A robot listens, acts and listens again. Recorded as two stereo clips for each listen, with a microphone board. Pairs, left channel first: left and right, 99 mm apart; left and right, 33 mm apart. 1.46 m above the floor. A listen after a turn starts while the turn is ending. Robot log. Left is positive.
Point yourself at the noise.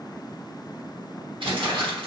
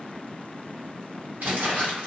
note: The crumpling: about 60° right or 120° right.
cmd yaw -60
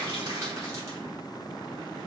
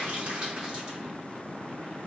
cmd idle
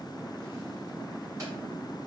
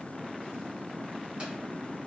cmd idle
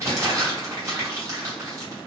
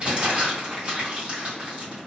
note: So it is at 35° right.
cmd yaw -35
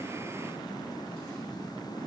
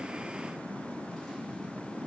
cmd idle
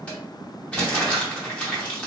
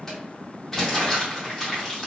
note: The crumpling is now 15° left.
cmd yaw +15
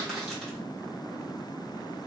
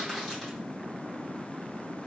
cmd idle
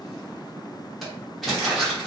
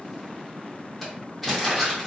end: Found it: crumpling, straight ahead.